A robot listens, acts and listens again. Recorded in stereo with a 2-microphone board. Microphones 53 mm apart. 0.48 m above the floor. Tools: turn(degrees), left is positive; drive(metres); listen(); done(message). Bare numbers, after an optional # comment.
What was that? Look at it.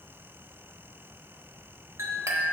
# The clink: about 65° right or 115° right.
turn(-65)
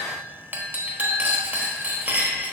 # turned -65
# So it is at 40° right.
turn(-40)
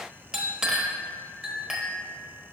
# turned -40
# The clink is now 10° right.
turn(-10)
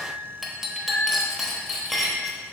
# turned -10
done("Found it: a clink, straight ahead, 1 to 2 m away.")